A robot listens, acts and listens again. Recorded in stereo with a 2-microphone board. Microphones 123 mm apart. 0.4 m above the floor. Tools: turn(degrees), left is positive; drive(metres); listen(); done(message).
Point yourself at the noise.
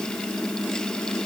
listen()
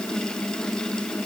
listen()
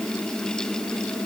done("I can't make out anything to turn to.")